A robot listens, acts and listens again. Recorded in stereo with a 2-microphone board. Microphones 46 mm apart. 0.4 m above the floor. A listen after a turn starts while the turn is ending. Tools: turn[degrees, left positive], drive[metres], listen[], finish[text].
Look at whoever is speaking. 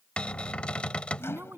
Thought: The woman speaking: about 55° right or 125° right.
Action: turn[-55]
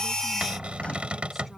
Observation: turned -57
Action: listen[]
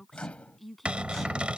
Action: finish[Found it: a woman speaking, straight ahead.]